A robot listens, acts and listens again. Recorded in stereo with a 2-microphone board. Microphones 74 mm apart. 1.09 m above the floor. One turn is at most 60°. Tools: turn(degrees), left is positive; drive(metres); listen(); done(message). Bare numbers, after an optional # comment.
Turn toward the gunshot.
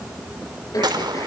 # The gunshot: about 70° right or 110° right.
turn(-60)
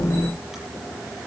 listen()
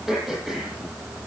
done("I heard a gunshot, but can't make it out now. It was about 10° right or 50° right.")